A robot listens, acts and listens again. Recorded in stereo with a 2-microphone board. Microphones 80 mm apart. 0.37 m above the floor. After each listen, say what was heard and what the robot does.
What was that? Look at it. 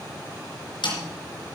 The snare drum: about 70° left or 110° left. Turn 70° left.
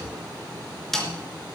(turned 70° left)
Facing the snare drum.